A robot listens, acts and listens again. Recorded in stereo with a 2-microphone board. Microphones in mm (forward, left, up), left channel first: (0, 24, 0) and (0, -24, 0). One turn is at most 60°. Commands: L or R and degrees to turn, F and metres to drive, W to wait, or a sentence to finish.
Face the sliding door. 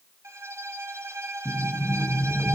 R30
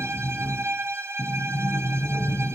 R60
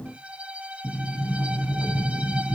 R60
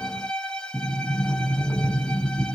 R35
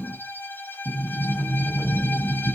Facing the sliding door.